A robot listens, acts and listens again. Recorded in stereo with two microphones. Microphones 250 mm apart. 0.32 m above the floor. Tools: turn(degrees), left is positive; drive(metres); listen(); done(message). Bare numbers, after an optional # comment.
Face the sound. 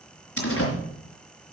# The door slam: about 60° left or 120° left.
turn(60)
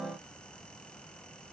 listen()
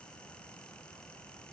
done("I heard a door slam, but can't make it out now. It was about straight ahead or 60° left.")